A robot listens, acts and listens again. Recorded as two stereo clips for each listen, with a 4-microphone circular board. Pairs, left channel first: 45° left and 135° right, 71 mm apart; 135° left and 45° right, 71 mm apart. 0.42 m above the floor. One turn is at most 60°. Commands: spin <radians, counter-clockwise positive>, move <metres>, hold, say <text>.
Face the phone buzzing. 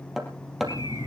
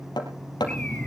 say Facing the phone buzzing, 2 to 4 m away.